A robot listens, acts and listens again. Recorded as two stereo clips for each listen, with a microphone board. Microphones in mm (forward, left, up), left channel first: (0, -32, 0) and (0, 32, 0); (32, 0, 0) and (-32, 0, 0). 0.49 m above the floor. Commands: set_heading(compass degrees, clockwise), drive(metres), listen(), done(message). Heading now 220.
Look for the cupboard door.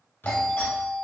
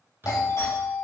set_heading(355)
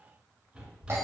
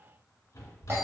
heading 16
set_heading(356)
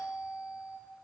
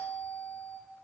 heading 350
listen()
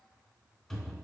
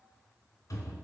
done("Found it: a cupboard door, straight ahead.")